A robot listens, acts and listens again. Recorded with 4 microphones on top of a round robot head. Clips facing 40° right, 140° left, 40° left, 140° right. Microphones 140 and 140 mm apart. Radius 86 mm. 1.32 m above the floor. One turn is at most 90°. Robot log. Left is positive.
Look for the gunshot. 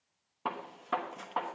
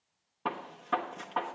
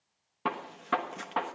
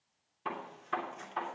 note: The gunshot: 45° left.
cmd yaw +45
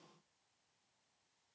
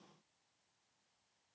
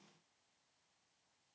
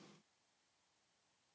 end: I heard a gunshot from this way, but can't make it out now.